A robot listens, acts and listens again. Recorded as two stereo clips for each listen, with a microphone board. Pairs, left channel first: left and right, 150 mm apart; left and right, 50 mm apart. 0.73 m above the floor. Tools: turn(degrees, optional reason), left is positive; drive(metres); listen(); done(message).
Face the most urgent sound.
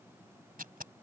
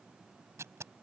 listen()
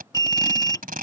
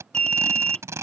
turn(degrees=25, reason="The alarm: about 25° left or 155° left.")
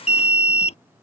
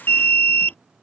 turn(degrees=130, reason="So it is at 130° left.")
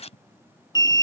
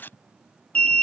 turn(degrees=25, reason="The alarm is now 25° left.")
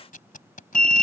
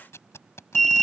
done("Found it: an alarm, straight ahead.")